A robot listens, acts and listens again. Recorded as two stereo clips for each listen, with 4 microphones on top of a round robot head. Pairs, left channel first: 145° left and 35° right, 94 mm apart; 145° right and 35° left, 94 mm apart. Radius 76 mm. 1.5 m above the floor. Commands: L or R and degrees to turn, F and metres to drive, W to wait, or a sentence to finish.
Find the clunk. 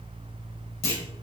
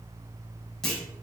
L130
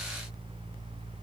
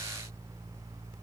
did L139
R10
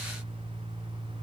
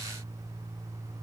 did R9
I heard a clunk from this way, but can't make it out now.